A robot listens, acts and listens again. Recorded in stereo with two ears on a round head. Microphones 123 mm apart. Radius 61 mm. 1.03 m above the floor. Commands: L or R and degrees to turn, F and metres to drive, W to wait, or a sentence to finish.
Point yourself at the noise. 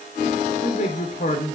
L55
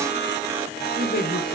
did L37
L85
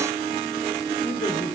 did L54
L35
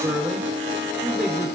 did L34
Found it: a man speaking, straight ahead, 2 to 4 m away.